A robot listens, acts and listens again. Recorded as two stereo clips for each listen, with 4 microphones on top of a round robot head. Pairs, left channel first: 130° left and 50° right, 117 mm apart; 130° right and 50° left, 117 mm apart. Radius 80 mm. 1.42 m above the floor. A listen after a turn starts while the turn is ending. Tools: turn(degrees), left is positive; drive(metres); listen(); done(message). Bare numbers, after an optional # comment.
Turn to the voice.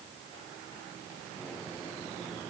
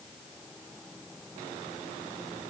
listen()
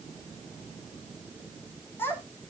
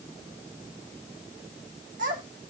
# The child speaking: 55° left.
turn(55)
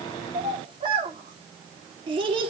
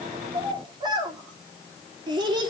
done("Facing the child speaking, 2 to 4 m away.")